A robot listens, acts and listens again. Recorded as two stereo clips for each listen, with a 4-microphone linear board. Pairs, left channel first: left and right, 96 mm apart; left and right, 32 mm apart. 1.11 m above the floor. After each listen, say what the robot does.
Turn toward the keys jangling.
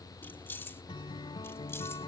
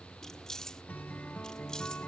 Turn 25° left.
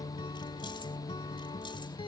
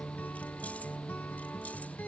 Keep listening.
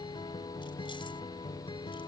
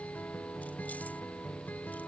Keep listening.
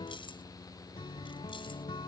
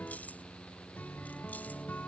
I heard keys jangling, but can't make it out now. It was about straight ahead or 130° left.